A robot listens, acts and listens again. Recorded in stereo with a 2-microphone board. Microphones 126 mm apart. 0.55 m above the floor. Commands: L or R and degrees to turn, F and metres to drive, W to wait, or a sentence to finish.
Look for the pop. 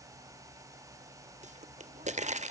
R65
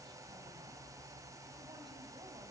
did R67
W
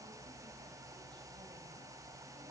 I heard a pop, but can't make it out now. It was about straight ahead or 45° right.